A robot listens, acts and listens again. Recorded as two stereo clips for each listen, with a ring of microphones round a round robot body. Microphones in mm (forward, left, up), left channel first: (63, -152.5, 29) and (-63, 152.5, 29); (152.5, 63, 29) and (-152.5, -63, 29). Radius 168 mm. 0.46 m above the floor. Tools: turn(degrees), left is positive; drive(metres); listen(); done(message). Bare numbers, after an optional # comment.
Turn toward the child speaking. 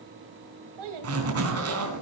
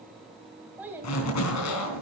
# The child speaking: 120° left.
turn(120)
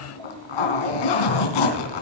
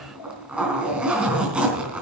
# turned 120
listen()
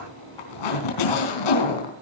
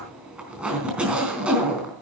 listen()
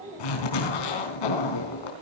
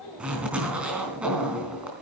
# The child speaking is now 45° left.
turn(45)
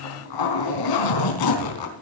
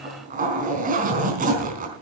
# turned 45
listen()
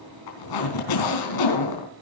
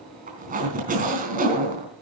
listen()
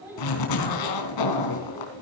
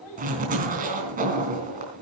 # The child speaking is now 25° left.
turn(25)
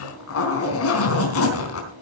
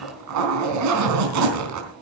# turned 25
listen()
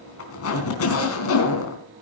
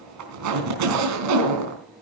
listen()
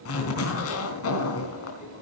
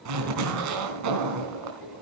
done("I heard a child speaking from this way, but can't make it out now.")